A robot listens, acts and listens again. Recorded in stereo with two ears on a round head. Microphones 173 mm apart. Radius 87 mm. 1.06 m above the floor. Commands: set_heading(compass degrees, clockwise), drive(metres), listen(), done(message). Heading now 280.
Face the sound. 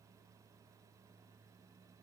listen()
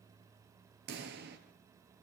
set_heading(340)
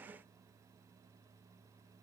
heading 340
listen()
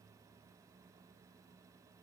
done("I heard a pop, but can't make it out now. It was about straight ahead or 60° right.")